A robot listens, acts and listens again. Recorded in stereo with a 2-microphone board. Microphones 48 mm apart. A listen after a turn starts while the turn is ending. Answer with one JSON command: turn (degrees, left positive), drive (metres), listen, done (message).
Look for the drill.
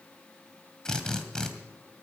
{"turn": 30}
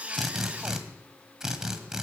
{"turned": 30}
{"turn": -15}
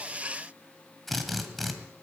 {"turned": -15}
{"done": "Facing the drill, 1 to 2 m away."}